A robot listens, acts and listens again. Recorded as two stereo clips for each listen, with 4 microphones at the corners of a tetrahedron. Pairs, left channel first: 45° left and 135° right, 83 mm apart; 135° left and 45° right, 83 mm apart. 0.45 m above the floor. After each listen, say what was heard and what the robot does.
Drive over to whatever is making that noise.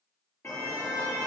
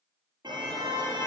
The car horn: 15° right. Turn 15° right.
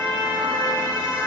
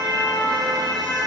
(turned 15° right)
Drive 1.0 m forward.
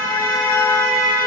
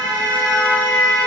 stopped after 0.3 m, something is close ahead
Blocked. The car horn is further on, straight ahead.